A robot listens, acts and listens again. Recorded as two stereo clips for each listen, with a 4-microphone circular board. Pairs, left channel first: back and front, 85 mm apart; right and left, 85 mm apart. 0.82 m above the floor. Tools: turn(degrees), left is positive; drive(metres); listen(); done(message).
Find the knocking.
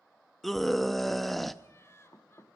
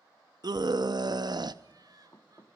turn(degrees=-135)
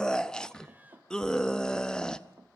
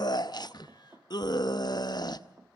turn(degrees=35)
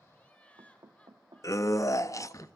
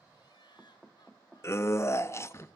done("Found it: knocking, straight ahead, 1 to 2 m away.")